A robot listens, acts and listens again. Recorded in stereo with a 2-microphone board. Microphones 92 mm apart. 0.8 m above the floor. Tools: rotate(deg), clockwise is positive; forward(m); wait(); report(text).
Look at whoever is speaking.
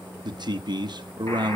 rotate(50)
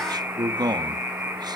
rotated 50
rotate(60)
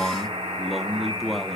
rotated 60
report("Found it: a man speaking, straight ahead.")